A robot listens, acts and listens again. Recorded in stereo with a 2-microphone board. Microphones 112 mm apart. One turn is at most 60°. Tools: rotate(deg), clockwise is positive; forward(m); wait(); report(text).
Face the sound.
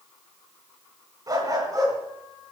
rotate(30)
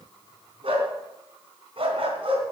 rotate(60)
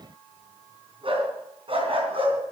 rotate(60)
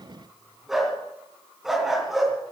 report("Facing the dog barking.")